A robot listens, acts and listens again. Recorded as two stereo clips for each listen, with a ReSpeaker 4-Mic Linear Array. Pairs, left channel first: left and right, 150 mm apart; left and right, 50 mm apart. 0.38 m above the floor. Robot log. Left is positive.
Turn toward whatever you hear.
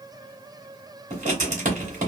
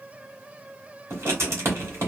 note: The writing: about 55° right or 125° right.
cmd yaw -55
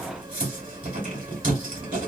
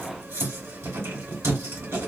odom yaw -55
note: So it is at 70° right.
cmd yaw -70
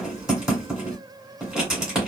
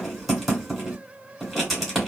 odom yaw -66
end: Found it: writing, straight ahead.